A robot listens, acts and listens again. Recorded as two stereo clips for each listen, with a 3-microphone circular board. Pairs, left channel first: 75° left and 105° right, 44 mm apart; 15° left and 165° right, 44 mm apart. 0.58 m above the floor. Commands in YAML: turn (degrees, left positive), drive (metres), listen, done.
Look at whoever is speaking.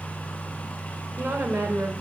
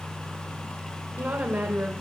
turn: -120
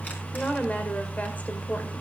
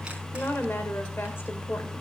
turn: 30
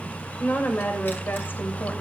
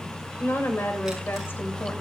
turn: 40
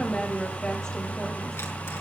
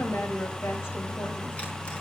done: "Found it: a woman speaking, straight ahead."